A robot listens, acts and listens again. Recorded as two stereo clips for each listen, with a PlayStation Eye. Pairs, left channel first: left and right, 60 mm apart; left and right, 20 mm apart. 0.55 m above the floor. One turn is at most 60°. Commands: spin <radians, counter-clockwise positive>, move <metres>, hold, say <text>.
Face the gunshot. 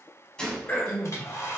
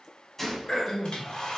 spin 0.52
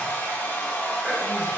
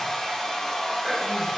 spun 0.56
hold
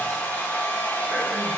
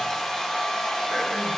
say I heard a gunshot, but can't make it out now. It was about 20° right or 135° left.